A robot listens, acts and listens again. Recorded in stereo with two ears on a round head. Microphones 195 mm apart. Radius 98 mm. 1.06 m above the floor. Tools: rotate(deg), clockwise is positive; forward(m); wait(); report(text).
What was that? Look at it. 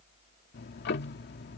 rotate(-50)
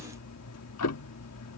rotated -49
rotate(-80)
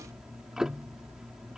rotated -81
report("Found it: ticking, straight ahead.")